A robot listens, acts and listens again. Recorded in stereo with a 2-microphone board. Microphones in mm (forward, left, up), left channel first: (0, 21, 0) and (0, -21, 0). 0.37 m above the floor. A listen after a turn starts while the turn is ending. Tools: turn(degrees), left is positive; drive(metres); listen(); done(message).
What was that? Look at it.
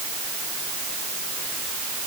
listen()
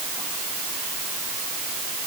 listen()
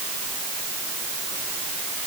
done("I can't make out anything to turn to.")